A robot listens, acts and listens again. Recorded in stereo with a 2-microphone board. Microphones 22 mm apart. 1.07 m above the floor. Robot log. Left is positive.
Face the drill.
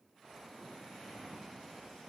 cmd idle
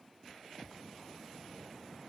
cmd idle
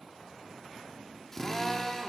note: The drill: about 25° left or 155° left.
cmd yaw +25
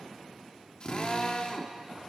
note: So it is at 130° left.
cmd yaw +130
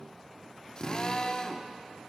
note: The drill is now 35° left.
cmd yaw +35
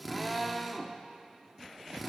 end: Found it: a drill, straight ahead, 1 to 2 m away.